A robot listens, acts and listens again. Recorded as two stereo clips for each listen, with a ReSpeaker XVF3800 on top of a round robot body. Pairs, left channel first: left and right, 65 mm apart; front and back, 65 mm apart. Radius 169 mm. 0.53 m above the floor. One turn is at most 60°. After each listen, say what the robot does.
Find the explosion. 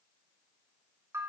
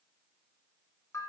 Keep listening.
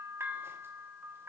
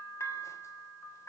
Keep listening.
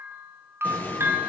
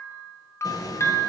Turn 25° left.
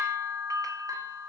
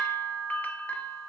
Facing where the explosion came from. I can't hear it now.